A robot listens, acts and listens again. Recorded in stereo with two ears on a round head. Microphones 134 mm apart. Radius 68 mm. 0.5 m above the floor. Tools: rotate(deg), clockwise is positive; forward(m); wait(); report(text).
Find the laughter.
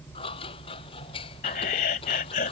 rotate(-60)
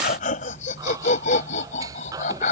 rotate(-55)
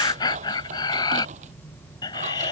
rotate(-30)
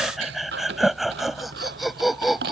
report("Facing the laughter.")